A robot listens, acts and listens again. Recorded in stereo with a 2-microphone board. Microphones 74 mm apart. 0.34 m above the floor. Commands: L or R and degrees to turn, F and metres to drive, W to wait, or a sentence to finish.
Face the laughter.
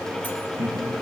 R40
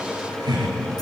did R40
R100
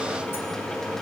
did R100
W
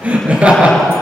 R20
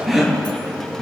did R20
Found it: laughter, straight ahead, over 4 m away.